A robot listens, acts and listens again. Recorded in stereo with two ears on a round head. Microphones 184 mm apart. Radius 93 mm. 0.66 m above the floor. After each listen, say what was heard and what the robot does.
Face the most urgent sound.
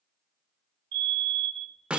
The fire alarm: about 55° right or 125° right. Turn 55° right.
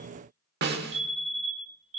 So it is at 40° right. Turn 40° right.
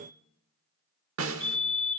Facing the fire alarm.